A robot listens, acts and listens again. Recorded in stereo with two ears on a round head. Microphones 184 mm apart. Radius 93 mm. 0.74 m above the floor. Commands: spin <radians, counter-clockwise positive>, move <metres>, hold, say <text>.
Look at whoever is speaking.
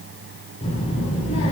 spin 0.52
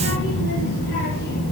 spin 2.09
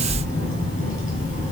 spin 0.61
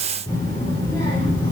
spin 0.17
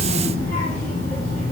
say Found it: a child speaking, straight ahead.